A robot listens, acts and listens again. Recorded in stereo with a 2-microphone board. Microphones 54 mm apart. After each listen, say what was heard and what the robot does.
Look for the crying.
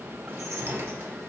Keep listening.
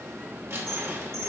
Keep listening.
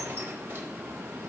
I can't make out crying to turn to.